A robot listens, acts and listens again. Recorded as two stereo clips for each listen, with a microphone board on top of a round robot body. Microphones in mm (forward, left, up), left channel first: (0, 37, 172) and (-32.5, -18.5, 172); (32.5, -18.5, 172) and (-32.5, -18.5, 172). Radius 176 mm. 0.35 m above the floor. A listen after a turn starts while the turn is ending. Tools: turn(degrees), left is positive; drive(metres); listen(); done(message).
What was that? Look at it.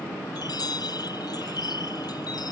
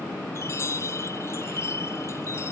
turn(degrees=50)
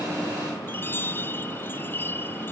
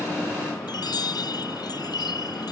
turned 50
done("Found it: a chime, straight ahead.")